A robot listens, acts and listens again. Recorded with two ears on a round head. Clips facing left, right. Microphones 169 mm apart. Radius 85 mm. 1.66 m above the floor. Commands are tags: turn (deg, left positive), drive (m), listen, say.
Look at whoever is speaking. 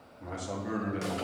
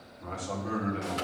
<turn deg="30"/>
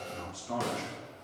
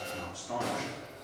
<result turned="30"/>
<turn deg="140"/>
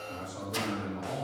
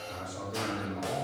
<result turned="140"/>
<say>Facing the man speaking, over 4 m away.</say>